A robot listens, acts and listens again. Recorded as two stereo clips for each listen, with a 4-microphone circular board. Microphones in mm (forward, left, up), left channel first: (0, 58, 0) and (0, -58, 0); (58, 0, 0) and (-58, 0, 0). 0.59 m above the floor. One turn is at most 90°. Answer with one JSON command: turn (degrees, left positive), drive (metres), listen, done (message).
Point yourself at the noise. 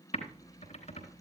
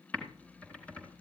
{"turn": 80}
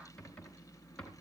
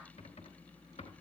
{"turn": 10}
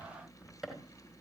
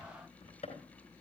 {"done": "Found it: typing on a keyboard, straight ahead."}